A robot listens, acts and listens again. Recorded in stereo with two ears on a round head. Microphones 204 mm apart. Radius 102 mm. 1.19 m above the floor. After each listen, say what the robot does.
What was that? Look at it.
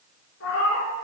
Turn 60° left.
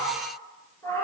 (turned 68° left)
Turn 15° left.
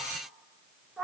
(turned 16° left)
Found it: a cat meowing, straight ahead, 2 to 4 m away.